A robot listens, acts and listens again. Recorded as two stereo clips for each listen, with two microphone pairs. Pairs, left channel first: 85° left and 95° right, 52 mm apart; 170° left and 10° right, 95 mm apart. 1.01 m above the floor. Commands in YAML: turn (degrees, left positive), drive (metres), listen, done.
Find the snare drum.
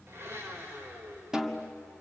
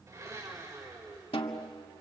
turn: -170
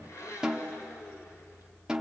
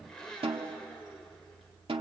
turn: -20
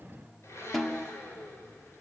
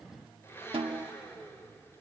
done: "Found it: a snare drum, straight ahead."